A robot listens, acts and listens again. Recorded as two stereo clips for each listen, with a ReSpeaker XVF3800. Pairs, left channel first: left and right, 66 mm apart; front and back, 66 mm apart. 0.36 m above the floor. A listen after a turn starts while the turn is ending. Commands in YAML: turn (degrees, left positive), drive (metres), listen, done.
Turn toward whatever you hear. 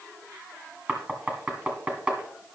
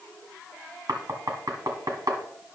turn: -160
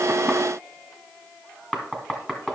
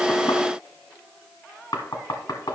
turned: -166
turn: 10
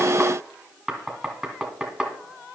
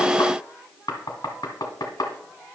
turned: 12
done: "Facing the knocking."